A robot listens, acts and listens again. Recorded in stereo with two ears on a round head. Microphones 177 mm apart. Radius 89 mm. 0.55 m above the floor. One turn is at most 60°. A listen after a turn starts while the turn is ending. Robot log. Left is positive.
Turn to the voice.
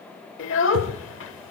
note: The child speaking: about 70° left or 110° left.
cmd yaw +60
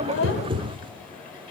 cmd idle
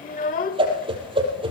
note: So it is at 45° left.
cmd yaw +45
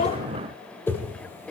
end: Found it: a child speaking, straight ahead.